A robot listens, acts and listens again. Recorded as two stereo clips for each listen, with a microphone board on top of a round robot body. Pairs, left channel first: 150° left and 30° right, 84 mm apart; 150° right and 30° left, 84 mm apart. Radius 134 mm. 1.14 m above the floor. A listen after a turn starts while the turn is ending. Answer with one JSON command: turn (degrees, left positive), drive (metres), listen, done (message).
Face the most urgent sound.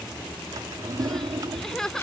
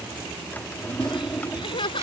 {"turn": -125}
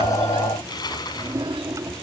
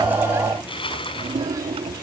{"listen": true}
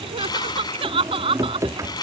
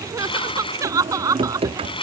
{"turn": -20}
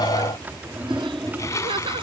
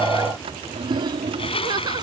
{"done": "Found it: crying, straight ahead."}